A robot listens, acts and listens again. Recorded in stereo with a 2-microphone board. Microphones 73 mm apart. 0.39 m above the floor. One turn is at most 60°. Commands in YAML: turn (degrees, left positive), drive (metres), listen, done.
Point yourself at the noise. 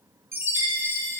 turn: -35
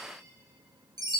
turn: -60
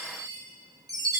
turn: -55
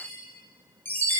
turn: 30
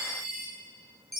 done: "Facing the chime."